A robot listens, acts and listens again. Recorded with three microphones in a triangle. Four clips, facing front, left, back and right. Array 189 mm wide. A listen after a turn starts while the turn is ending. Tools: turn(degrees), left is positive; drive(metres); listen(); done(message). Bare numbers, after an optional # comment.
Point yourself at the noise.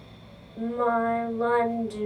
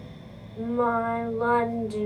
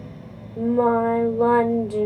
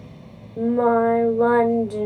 # The singing: 130° right.
turn(-130)
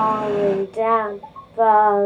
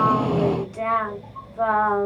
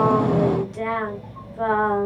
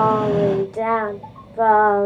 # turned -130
# The singing is now 45° right.
turn(-45)
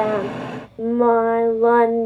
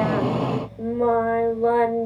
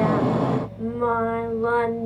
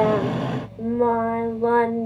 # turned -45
done("Facing the singing.")